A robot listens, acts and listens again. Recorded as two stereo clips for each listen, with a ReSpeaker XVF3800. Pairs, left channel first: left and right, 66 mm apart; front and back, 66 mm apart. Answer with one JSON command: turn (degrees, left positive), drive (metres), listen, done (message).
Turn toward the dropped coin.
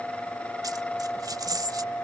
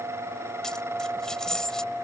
{"turn": -80}
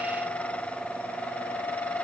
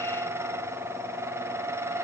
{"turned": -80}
{"done": "I heard a dropped coin from this way, but can't make it out now."}